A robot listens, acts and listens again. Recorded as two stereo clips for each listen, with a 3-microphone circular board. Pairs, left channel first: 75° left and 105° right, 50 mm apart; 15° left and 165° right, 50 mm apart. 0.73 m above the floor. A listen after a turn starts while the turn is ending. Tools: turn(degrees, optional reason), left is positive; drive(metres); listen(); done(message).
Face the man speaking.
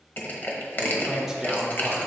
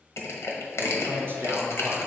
turn(degrees=165, reason="The man speaking: 165° left.")
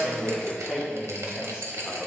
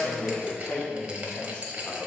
turn(degrees=-30, reason="The man speaking is now 30° right.")
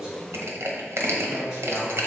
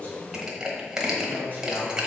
turn(degrees=-30, reason="The man speaking is now 30° right.")
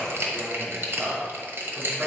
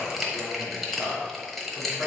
turn(degrees=-15, reason="The man speaking is now 15° right.")
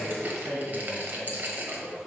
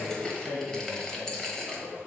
done("Facing the man speaking, 1 to 2 m away.")